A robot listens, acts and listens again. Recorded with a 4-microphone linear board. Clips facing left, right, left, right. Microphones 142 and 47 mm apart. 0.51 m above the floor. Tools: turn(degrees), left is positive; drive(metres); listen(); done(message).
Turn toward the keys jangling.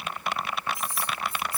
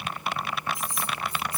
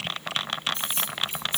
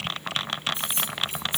turn(degrees=-20)
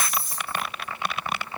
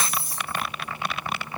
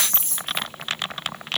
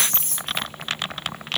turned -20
turn(degrees=-140)
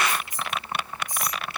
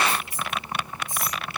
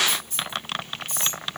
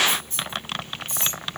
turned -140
turn(degrees=-20)
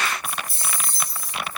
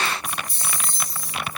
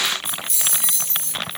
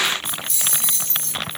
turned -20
done("Found it: keys jangling, straight ahead, over 4 m away.")